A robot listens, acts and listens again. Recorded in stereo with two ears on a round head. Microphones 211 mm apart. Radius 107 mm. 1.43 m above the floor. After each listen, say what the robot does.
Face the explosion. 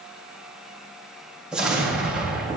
Turn 30° right.
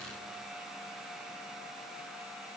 Keep listening.
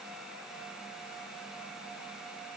I heard an explosion, but can't make it out now. It was about 25° left or 145° right.